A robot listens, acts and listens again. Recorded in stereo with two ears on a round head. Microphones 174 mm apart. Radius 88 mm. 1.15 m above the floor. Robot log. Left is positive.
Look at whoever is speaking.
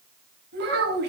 note: The child speaking: about 55° right or 125° right.
cmd yaw -55
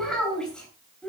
end: Facing the child speaking, over 4 m away.